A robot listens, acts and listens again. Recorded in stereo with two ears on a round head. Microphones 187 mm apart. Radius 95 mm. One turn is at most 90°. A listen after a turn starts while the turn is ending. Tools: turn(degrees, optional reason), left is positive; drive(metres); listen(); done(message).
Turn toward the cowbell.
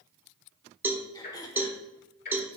turn(degrees=-30)
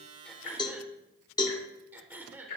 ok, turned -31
turn(degrees=20, reason="So it is at 20° left.")
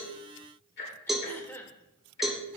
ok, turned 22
done("Facing the cowbell.")